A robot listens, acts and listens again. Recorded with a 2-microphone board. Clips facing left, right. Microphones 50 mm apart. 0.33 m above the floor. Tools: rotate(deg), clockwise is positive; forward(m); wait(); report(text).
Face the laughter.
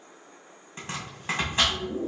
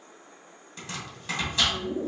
rotate(35)
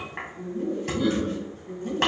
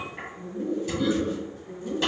rotate(-10)
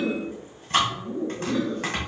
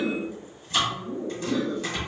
rotate(-10)
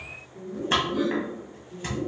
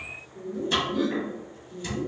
report("Found it: laughter, straight ahead.")